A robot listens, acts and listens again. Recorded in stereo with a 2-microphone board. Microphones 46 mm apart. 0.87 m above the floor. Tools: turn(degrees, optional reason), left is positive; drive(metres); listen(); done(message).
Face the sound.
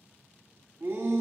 turn(degrees=-55, reason="The shout: about 55° right or 125° right.")
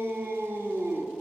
turn(degrees=-65, reason="So it is at 65° right.")
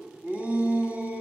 turn(degrees=-35, reason="The shout is now 35° right.")
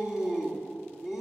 turn(degrees=-15, reason="The shout is now 15° right.")
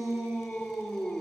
done("Facing the shout, 1 to 2 m away.")